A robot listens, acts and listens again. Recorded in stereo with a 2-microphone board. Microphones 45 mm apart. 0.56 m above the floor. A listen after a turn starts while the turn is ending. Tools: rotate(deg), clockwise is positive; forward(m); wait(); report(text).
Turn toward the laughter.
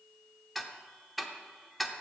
wait()
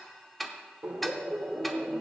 rotate(35)
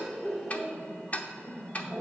rotate(-25)
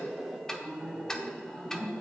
rotate(-10)
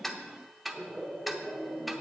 report("Facing the laughter, 2 to 4 m away.")